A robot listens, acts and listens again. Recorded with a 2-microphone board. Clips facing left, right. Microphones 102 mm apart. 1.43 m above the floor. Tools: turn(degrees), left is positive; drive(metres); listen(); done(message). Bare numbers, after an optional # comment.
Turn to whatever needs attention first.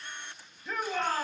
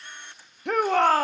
# The shout: about 65° right or 115° right.
turn(-65)
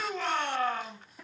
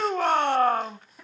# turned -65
# So it is at 45° right.
turn(-45)
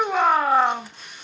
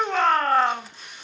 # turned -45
# The shout is now 10° left.
turn(10)
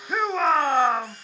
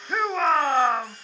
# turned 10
done("Facing the shout, 1 to 2 m away.")